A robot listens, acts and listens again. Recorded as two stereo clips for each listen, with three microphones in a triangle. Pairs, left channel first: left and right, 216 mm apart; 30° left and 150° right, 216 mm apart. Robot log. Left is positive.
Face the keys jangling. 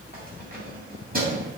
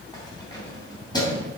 note: The keys jangling: 40° right.
cmd yaw -40
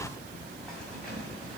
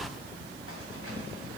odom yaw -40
cmd idle
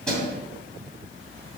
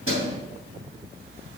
end: Found it: keys jangling, straight ahead, 2 to 4 m away.